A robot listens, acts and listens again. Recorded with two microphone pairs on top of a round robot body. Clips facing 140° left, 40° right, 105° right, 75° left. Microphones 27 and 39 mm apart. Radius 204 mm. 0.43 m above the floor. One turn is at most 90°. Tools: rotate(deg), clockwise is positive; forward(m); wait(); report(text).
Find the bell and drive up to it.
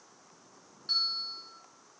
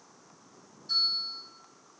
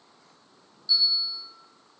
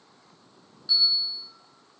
rotate(-90)
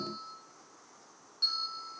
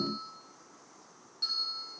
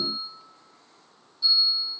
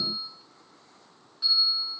rotate(-50)
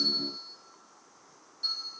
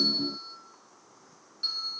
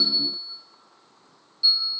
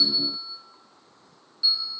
rotate(-15)
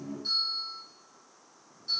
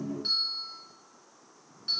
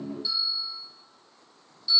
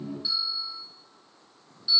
forward(1.0)
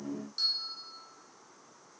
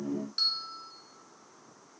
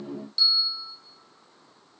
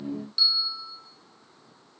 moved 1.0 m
forward(1.0)
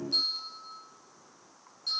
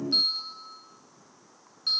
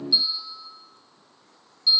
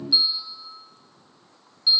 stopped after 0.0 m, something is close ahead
report("I am next to the bell.")